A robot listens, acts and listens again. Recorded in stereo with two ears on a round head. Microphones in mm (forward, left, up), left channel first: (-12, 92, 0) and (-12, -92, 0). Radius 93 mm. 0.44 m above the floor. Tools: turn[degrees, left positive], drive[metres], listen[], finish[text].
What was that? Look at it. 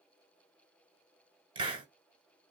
Thought: The hiss: about 25° right or 155° right.
Action: turn[-25]
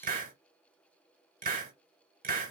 Thought: So it is at 125° right.
Action: turn[-125]
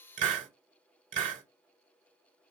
Thought: The hiss is now 45° right.
Action: turn[-45]
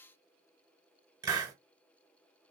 Thought: The hiss is now 20° right.
Action: turn[-20]
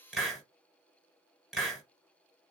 Action: finish[Facing the hiss.]